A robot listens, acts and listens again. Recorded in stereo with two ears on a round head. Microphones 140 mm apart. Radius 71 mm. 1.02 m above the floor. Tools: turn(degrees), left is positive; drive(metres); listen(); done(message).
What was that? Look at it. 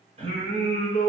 turn(degrees=-45)
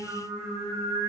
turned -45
turn(degrees=-25)
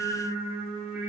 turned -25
turn(degrees=-15)
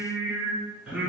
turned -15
turn(degrees=-10)
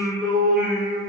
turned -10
done("Facing the singing, 2 to 4 m away.")